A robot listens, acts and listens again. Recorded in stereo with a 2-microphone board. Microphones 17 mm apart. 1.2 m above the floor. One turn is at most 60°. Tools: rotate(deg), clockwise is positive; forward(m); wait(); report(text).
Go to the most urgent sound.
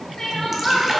rotate(-35)
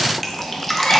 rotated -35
wait()
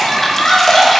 rotate(-60)
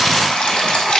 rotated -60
rotate(-50)
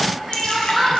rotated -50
forward(1.0)
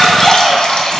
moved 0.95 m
rotate(-10)
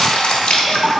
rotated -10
wait()
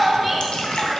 forward(1.0)
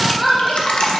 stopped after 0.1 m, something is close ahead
report("I am next to the crying.")